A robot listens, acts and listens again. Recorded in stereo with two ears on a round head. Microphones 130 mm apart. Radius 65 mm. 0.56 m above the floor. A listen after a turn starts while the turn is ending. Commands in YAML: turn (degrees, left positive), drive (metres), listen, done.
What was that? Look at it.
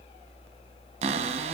turn: -45
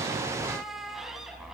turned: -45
listen: true
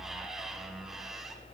listen: true
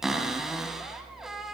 done: "Facing the cupboard door."